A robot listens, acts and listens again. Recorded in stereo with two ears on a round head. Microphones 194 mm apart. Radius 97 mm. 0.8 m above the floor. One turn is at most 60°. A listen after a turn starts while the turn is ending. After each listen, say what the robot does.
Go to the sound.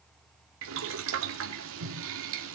Turn 60° right.
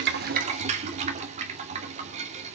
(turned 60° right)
Turn 35° right.
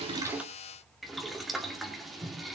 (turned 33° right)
Drive 1.0 m forward.
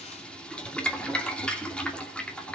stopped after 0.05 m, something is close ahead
Something is in my way. I am facing the boiling but have not reached it.